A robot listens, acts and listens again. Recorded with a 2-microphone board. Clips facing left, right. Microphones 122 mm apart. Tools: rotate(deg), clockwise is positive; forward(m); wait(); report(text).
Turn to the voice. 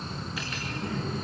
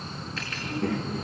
rotate(65)
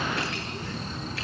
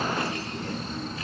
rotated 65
wait()
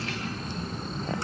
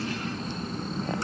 rotate(45)
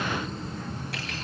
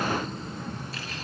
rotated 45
rotate(10)
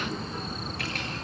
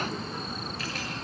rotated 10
wait()
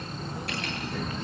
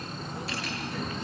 wait()
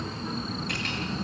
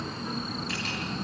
report("I heard a child speaking from this way, but can't make it out now.")